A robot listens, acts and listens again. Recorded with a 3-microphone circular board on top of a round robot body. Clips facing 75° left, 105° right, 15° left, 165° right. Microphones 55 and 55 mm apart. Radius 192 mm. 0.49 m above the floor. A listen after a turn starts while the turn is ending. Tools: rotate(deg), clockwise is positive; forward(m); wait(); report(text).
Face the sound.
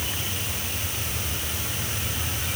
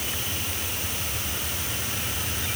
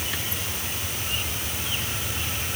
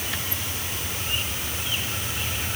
wait()
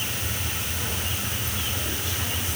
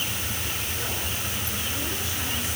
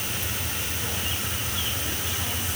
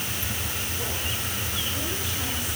wait()
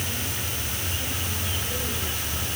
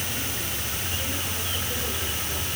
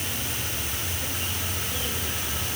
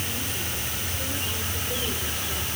report("I can't make out anything to turn to.")